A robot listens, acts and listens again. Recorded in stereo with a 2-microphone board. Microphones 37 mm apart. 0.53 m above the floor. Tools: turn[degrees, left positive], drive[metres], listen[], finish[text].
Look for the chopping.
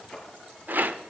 Action: listen[]
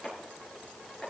Action: turn[-30]
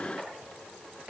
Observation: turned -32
Thought: So it is at 145° right.
Action: turn[-145]
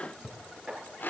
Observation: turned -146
Action: finish[Facing the chopping, over 4 m away.]